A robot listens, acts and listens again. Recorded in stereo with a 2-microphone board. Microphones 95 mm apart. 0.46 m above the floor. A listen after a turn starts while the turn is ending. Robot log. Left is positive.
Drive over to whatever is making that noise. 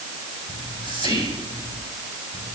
note: The whispering: about 60° right or 120° right.
cmd yaw -60
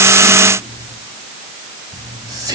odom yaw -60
note: So it is at 50° right.
cmd yaw -50
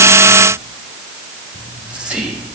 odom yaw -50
note: The whispering is now 15° right.
cmd yaw -15
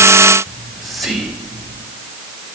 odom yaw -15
cmd fwd 1.0
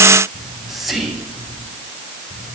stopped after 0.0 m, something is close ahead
end: Blocked. The whispering is further on, straight ahead.